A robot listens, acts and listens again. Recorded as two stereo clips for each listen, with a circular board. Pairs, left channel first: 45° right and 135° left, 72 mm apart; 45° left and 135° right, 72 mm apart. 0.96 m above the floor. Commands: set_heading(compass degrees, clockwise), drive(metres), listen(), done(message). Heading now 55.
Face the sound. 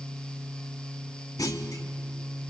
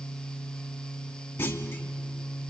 set_heading(65)
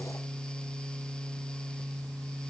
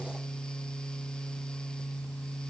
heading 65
done("I heard a clunk from this way, but can't make it out now.")